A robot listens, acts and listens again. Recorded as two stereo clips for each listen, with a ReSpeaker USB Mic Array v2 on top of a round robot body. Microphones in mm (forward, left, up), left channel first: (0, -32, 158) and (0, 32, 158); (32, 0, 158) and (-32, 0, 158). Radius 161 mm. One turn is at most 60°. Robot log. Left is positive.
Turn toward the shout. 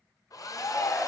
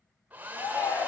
note: The shout: 35° right.
cmd yaw -35
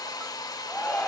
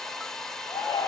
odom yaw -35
end: Found it: a shout, straight ahead, 2 to 4 m away.